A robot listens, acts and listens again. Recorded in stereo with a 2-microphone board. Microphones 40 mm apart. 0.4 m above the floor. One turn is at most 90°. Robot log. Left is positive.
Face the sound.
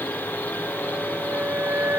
note: The flute: about 70° right or 110° right.
cmd yaw -70
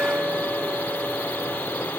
note: So it is at 40° right.
cmd yaw -40
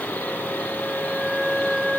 end: Found it: a flute, straight ahead.